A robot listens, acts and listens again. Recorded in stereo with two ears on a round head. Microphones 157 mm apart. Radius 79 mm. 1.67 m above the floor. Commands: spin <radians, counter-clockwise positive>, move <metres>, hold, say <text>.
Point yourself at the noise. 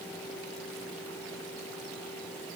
hold
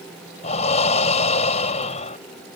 spin 0.70
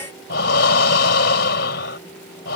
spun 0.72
spin 1.66
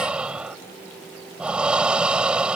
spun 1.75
say Facing the breathing.